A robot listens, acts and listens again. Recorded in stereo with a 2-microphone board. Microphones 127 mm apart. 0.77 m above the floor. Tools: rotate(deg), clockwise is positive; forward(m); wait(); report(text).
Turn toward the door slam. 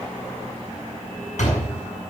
rotate(-90)
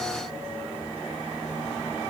report("I heard a door slam from this way, but can't make it out now.")